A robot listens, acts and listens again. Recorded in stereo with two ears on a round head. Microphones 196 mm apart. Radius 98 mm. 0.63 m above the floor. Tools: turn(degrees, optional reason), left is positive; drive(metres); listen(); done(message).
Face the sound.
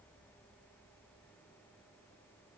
listen()
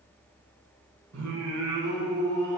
turn(degrees=-90)
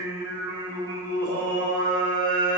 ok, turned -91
turn(degrees=-25, reason="So it is at 25° right.")
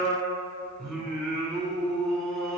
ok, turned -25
done("Facing the singing.")